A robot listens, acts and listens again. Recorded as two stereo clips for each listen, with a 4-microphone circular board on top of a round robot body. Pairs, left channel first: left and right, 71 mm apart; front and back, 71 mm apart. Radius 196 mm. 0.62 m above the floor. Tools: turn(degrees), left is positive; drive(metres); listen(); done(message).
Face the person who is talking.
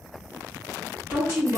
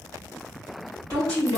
turn(degrees=-155)
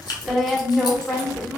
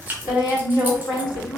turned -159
done("Facing the woman speaking, 1 to 2 m away.")